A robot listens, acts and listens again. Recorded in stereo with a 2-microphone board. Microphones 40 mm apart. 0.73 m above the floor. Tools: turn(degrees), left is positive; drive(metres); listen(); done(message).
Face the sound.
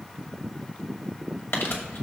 turn(degrees=70)
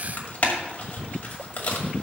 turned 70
turn(degrees=40)
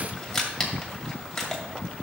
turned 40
turn(degrees=10)
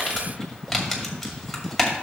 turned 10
done("Facing the crumpling, 2 to 4 m away.")